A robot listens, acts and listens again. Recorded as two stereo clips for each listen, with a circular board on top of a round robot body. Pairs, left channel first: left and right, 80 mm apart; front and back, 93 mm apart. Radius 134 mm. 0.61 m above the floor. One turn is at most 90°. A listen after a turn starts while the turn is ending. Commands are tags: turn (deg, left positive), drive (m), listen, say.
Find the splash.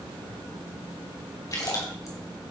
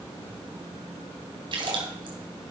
<turn deg="90"/>
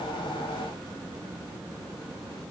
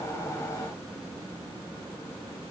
<turn deg="50"/>
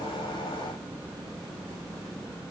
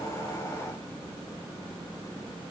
<say>I heard a splash from this way, but can't make it out now.</say>